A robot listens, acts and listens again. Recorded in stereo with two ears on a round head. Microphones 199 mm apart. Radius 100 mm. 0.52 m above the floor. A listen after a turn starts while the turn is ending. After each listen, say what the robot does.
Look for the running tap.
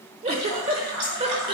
Turn 60° right.
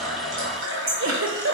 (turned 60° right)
Turn 60° right.
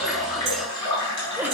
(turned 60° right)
Turn 20° left.
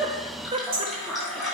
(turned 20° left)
Facing the running tap.